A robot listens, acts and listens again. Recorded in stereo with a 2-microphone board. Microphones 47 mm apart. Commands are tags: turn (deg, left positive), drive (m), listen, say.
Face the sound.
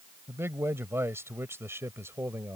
<turn deg="-70"/>
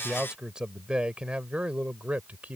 <turn deg="-35"/>
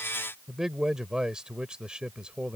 <turn deg="-15"/>
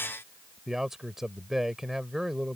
<say>Found it: a man speaking, straight ahead.</say>